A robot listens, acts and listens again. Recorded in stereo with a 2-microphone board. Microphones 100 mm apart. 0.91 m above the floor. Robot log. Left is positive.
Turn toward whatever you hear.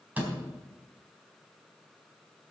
note: The door slam: about 15° right or 165° right.
cmd yaw -15
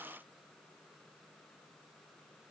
cmd idle
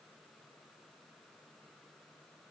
end: I heard a door slam, but can't make it out now. It was about straight ahead or 150° right.